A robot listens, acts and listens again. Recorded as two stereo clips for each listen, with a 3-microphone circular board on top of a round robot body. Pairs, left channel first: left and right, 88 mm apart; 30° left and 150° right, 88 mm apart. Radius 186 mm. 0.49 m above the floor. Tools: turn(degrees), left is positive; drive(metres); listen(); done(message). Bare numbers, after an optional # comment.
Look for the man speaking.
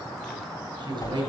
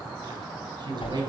# The man speaking: 120° right.
turn(-120)
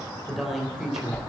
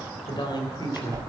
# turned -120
done("Facing the man speaking.")